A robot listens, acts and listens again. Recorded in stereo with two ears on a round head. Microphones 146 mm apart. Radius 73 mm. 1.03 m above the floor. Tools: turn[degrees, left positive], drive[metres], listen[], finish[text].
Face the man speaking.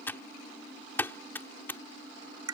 Action: listen[]
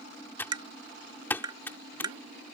Action: listen[]
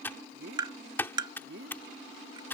Thought: The man speaking: about 65° right or 115° right.
Action: turn[-65]
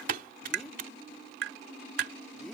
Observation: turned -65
Action: listen[]
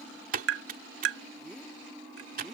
Action: listen[]
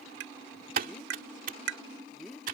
Action: finish[Facing the man speaking.]